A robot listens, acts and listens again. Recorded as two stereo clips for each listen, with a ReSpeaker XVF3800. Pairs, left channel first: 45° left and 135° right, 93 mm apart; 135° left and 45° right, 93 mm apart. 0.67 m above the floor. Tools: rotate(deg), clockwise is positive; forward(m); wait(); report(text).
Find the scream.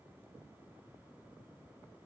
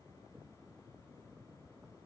wait()
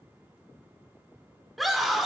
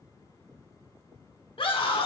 rotate(-135)
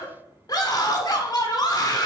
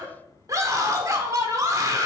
report("Found it: a scream, straight ahead.")